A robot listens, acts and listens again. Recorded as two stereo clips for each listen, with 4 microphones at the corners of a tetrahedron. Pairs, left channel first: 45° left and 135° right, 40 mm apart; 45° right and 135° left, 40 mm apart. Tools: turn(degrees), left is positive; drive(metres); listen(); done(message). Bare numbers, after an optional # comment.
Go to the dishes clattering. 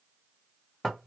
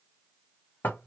listen()
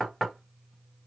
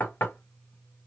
listen()
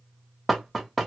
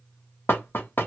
done("I can't make out dishes clattering to turn to.")